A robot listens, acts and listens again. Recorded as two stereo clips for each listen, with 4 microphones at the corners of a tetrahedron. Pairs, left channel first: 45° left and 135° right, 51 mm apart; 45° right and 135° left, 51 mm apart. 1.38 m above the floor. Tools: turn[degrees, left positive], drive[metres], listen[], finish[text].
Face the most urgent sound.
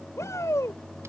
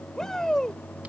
Thought: The shout: 35° left.
Action: turn[35]
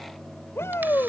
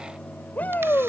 Thought: The shout is now 15° left.
Action: turn[15]
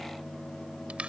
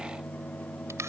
Action: listen[]
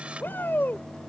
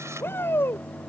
Action: finish[Found it: a shout, straight ahead.]